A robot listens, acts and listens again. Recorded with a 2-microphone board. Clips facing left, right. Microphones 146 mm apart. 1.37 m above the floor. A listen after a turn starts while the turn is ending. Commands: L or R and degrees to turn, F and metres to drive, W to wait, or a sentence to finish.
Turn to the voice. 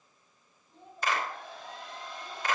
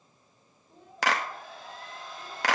R60
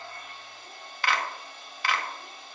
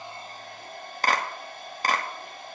W
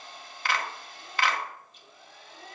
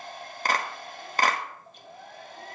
W
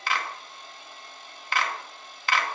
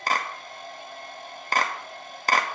I heard a child speaking, but can't make it out now. It was about straight ahead or 60° right.